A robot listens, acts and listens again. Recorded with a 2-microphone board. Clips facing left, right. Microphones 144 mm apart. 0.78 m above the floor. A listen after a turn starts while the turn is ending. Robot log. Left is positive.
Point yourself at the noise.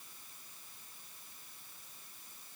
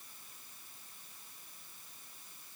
cmd idle
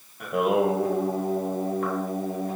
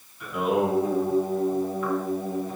note: The singing: about 65° left or 115° left.
cmd yaw +65
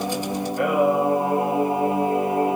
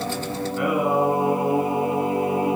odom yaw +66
note: So it is at 50° left.
cmd yaw +50
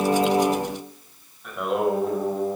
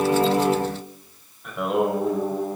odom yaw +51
end: Found it: singing, straight ahead.